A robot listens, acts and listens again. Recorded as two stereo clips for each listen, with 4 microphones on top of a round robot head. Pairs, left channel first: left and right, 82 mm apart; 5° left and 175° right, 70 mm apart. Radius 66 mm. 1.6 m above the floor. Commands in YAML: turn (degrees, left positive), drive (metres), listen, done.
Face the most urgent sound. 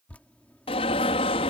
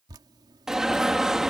turn: 100
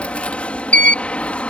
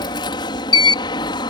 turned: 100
turn: 15
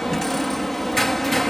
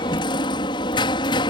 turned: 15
done: "Facing the alarm."